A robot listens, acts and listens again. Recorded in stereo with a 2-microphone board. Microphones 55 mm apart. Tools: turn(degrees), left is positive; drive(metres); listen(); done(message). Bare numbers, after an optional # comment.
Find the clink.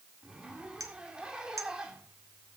# The clink: about 65° right or 115° right.
turn(-65)
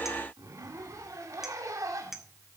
done("Found it: a clink, straight ahead.")